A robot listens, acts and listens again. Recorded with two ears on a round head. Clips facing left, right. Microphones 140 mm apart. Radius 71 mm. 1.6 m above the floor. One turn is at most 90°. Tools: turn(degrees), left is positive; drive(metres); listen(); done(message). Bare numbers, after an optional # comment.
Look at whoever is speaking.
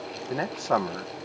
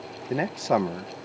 # The man speaking: about 15° right or 165° right.
turn(-15)
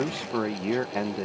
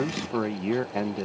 done("Facing the man speaking.")